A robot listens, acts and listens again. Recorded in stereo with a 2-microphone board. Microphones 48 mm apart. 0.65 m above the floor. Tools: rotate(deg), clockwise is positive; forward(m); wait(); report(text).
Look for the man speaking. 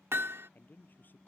rotate(-40)
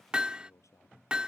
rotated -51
rotate(-90)
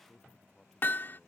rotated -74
rotate(-15)
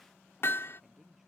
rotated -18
report("Facing the man speaking.")